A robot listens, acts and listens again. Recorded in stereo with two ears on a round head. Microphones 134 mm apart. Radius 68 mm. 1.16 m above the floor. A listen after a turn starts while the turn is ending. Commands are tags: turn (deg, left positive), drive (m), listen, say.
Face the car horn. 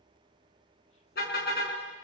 <turn deg="90"/>
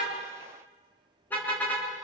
<turn deg="10"/>
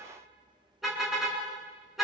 <say>Found it: a car horn, straight ahead.</say>